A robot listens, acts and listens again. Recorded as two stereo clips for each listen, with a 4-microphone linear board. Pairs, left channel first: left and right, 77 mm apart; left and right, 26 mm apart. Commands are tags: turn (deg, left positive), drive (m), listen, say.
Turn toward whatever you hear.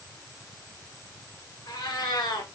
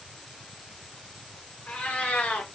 <turn deg="70"/>
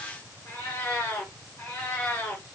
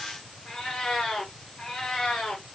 <turn deg="25"/>
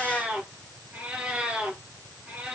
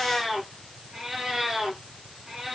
<turn deg="-15"/>
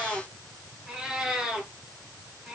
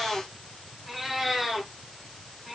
<say>Found it: a cat meowing, straight ahead.</say>